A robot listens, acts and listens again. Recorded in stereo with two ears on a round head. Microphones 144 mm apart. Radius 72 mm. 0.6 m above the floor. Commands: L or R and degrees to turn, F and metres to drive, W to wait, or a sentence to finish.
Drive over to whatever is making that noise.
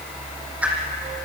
R30
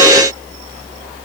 W
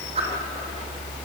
R140
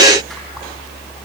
W
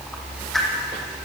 F1.0
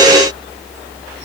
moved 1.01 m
W
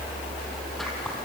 F1.0
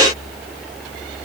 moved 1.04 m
W
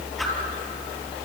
W
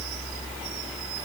I heard a whoosh from this way, but can't make it out now. I did not reach it.